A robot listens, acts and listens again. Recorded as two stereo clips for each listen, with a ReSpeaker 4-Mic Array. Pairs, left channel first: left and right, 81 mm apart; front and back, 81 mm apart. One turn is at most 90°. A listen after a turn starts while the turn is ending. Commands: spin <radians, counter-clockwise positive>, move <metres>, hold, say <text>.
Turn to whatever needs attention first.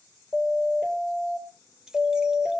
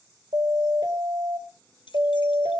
spin 1.57
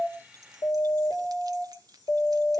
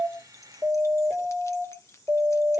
spin 1.57
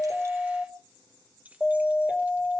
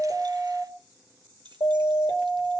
spin -0.17
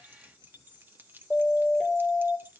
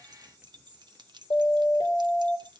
say Found it: a siren, straight ahead.